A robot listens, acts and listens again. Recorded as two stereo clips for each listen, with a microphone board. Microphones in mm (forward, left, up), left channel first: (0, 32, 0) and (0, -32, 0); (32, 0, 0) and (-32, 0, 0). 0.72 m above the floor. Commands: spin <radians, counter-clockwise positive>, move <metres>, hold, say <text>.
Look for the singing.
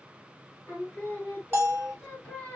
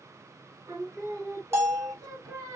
spin 2.79
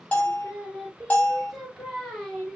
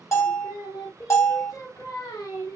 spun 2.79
say Facing the singing.